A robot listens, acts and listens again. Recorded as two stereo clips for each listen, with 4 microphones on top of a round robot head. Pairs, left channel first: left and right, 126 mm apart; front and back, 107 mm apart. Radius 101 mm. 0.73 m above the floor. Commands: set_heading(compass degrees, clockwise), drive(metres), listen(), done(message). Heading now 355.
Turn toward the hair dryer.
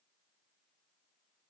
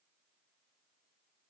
listen()
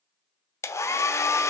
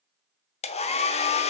set_heading(335)
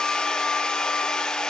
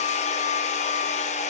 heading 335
done("Found it: a hair dryer, straight ahead.")